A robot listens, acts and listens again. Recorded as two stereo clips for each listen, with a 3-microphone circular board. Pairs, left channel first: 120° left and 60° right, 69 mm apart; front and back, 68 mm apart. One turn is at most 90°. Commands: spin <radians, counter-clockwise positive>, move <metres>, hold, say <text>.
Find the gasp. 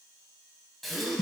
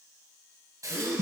spin -1.57
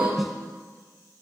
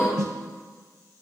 spin -1.05
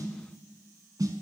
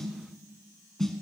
say I heard a gasp from this way, but can't make it out now.